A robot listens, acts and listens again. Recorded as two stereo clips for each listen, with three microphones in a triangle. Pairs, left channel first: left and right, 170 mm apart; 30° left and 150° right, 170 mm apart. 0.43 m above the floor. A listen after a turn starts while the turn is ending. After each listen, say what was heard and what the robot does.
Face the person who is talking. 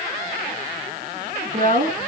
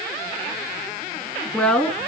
The woman speaking: 55° right. Turn 55° right.
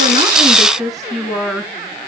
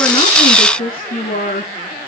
Found it: a woman speaking, straight ahead, over 4 m away.